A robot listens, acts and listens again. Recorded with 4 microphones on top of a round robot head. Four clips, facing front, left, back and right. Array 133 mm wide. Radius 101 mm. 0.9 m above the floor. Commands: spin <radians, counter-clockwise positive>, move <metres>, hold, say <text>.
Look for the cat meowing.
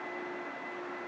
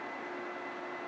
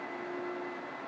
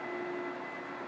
hold
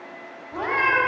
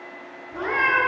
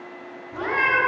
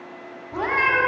spin -0.96
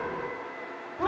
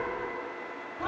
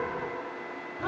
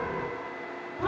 say Found it: a cat meowing, straight ahead.